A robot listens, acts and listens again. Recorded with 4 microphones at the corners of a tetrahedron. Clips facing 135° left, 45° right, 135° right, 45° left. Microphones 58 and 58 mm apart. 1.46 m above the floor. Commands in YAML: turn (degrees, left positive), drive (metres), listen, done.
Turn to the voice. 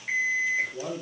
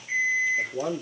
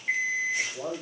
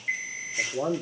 done: "Found it: a man speaking, straight ahead."